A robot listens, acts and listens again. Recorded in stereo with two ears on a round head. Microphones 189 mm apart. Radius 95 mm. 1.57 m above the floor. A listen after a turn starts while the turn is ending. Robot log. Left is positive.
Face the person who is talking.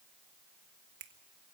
cmd idle
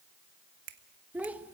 cmd yaw -30
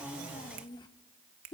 note: So it is at 25° left.
cmd yaw +25
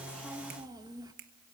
note: The child speaking is now 20° right.
cmd yaw -20
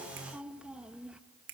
end: Found it: a child speaking, straight ahead, 1 to 2 m away.